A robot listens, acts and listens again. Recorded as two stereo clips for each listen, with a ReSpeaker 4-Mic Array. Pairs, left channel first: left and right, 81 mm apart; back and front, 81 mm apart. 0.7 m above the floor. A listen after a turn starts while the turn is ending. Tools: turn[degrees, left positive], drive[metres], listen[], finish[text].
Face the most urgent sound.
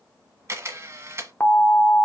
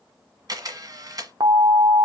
Thought: The alarm: 30° left.
Action: turn[30]
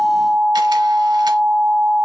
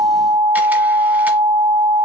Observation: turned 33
Action: finish[Facing the alarm.]